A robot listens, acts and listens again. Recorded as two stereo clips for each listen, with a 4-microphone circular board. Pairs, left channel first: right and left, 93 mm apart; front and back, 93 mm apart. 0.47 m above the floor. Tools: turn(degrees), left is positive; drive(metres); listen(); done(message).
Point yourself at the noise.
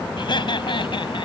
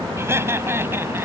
turn(degrees=-115)
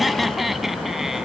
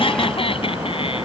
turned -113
done("Found it: laughter, straight ahead.")